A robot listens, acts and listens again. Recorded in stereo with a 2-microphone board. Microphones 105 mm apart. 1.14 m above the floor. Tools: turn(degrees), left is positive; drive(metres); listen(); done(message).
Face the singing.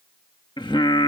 turn(degrees=55)
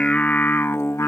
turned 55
turn(degrees=30)
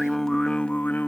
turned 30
turn(degrees=20)
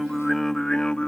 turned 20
turn(degrees=10)
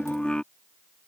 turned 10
turn(degrees=10)
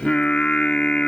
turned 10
turn(degrees=10)
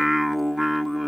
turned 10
done("Facing the singing.")